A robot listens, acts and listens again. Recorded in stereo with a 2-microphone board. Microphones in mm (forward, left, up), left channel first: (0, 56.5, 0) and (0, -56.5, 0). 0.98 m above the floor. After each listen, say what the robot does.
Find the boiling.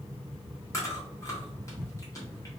Keep listening.
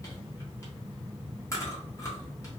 Keep listening.
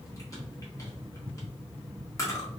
I can't make out boiling to turn to.